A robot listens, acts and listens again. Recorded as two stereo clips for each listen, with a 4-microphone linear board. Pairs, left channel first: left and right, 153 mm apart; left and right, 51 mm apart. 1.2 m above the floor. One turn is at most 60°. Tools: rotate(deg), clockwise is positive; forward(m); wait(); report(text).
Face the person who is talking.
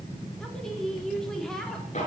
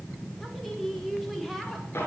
rotate(-30)
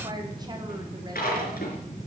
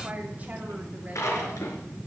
wait()
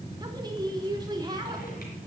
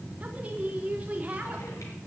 rotate(30)
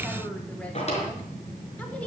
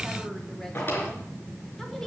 wait()
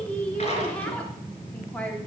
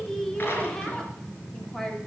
rotate(-10)
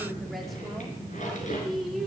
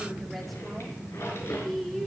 report("Facing the woman speaking, 2 to 4 m away.")